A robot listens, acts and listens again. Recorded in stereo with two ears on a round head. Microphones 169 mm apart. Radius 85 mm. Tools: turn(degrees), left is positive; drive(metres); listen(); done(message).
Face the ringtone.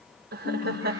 turn(degrees=35)
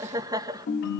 turn(degrees=110)
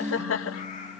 turn(degrees=-10)
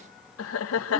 done("Facing the ringtone.")